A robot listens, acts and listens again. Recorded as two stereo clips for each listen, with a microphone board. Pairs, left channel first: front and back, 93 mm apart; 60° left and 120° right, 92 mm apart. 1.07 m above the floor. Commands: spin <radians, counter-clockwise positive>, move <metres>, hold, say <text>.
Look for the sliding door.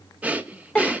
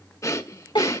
hold
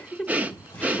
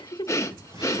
spin -1.13
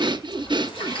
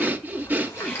say Facing the sliding door.